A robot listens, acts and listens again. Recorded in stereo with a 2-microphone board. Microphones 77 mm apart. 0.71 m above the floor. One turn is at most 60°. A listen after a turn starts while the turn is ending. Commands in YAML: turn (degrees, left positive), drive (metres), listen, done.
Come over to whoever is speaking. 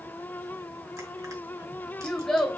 turn: 30
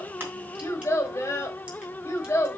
turn: 60
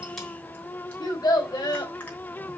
turn: 60
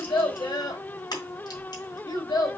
turn: 60
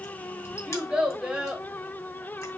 turn: -10
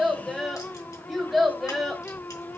drive: 1.0
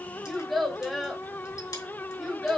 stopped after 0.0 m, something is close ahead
done: "Blocked. The child speaking is further on, straight ahead."